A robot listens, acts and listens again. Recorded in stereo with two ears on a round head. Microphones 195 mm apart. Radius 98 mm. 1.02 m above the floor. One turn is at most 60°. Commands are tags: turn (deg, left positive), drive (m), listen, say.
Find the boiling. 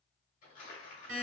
<listen/>
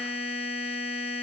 <listen/>
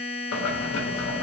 <turn deg="60"/>
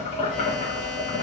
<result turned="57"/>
<turn deg="35"/>
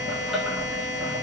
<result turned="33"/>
<say>Found it: boiling, straight ahead, under 1 m away.</say>